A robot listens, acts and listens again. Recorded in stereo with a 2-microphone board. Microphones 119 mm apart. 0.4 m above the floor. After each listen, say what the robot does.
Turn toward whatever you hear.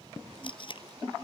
Turn 45° left.
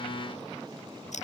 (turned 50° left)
Keep listening.
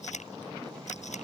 Turn 85° left.
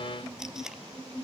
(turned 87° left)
Facing the tape being pulled.